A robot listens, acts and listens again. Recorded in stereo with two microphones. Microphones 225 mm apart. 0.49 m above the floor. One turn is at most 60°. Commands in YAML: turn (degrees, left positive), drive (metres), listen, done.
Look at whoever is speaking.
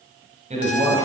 turn: -30
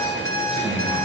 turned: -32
listen: true
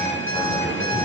listen: true
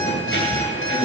done: "I heard a man speaking, but can't make it out now. It was about straight ahead or 115° right."